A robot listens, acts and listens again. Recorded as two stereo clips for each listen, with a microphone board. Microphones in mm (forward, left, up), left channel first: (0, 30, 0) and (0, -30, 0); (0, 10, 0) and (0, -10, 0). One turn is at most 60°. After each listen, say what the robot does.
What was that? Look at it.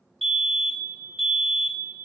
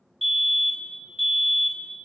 Turn 30° left.
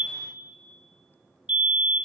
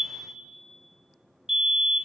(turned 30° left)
Turn 30° right.
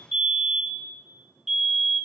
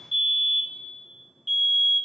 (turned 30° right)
Found it: a fire alarm, straight ahead, 2 to 4 m away.